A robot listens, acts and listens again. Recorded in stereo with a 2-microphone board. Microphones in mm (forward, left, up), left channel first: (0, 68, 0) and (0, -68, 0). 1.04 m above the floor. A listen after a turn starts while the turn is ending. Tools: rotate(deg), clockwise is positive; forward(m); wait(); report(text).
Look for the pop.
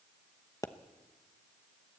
rotate(-25)
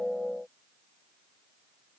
wait()
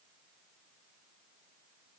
report("I heard a pop, but can't make it out now. It was about straight ahead or 130° left.")